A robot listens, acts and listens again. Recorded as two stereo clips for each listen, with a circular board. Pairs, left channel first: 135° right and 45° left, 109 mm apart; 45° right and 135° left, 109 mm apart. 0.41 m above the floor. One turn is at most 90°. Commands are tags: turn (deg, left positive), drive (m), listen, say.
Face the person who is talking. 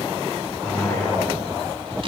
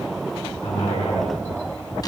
<turn deg="-60"/>
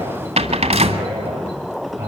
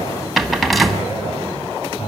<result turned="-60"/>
<turn deg="-30"/>
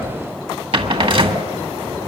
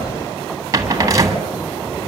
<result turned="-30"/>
<listen/>
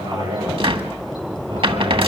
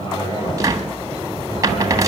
<say>Found it: a man speaking, straight ahead, over 4 m away.</say>